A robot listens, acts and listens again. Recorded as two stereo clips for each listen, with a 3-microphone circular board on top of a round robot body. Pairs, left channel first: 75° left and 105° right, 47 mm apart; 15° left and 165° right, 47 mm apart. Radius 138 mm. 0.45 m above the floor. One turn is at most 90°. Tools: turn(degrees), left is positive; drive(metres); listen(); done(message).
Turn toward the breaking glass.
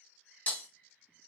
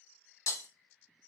turn(degrees=20)
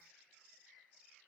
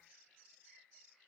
done("Facing where the breaking glass came from. I can't hear it now.")